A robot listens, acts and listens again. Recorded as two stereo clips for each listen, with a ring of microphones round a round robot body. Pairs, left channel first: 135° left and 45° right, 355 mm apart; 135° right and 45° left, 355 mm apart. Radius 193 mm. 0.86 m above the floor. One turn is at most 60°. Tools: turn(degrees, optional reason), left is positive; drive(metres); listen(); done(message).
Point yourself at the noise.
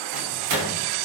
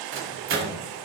turn(degrees=-10, reason="The microwave: 10° right.")
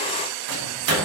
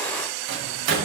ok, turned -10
done("Facing the microwave.")